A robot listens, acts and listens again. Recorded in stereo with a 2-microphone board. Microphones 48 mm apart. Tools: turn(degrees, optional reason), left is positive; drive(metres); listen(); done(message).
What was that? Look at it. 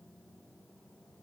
listen()
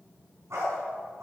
turn(degrees=-90)
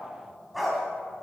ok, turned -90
done("Facing the dog barking, 2 to 4 m away.")